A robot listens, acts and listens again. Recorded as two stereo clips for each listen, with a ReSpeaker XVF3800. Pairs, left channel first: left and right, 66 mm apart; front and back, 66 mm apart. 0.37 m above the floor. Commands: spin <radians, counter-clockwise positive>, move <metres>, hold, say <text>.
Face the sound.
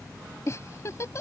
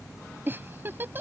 spin 2.18
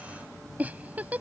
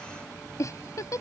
spin -0.44
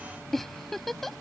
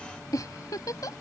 say Found it: a giggle, straight ahead.